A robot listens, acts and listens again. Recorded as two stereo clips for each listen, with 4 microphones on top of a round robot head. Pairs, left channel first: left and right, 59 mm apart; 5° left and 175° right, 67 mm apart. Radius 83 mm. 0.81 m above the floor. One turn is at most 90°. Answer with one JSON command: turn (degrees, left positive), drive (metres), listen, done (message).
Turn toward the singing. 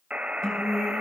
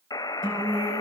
{"turn": 90}
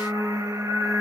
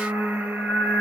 {"turn": 65}
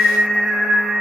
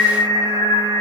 {"done": "Facing the singing."}